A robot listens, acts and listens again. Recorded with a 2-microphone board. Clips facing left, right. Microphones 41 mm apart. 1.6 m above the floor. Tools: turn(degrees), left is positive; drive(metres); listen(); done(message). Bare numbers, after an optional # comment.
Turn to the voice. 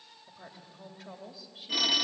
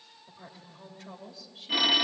turn(30)
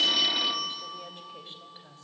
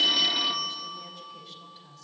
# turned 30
# So it is at 140° left.
turn(140)
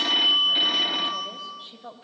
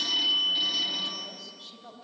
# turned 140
# The woman speaking is now 25° left.
turn(25)
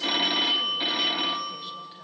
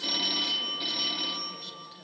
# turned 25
listen()
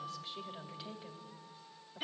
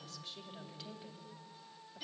# The woman speaking is now 15° left.
turn(15)
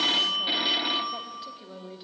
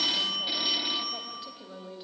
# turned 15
done("Found it: a woman speaking, straight ahead, 2 to 4 m away.")